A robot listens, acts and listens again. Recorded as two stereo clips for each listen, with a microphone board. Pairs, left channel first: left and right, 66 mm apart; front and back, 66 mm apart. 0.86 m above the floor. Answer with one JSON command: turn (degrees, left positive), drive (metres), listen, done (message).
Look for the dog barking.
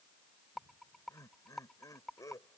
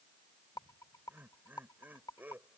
{"listen": true}
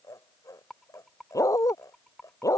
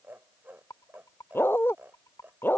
{"turn": 55}
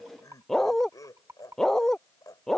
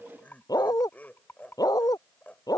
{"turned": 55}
{"done": "Facing the dog barking."}